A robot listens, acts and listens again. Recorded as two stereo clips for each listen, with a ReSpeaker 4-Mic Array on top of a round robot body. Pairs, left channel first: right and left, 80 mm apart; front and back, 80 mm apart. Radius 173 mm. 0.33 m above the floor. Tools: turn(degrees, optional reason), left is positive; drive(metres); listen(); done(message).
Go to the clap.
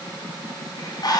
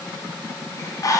listen()
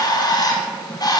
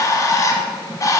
listen()
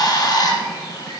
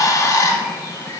done("I can't make out a clap, only a bird.")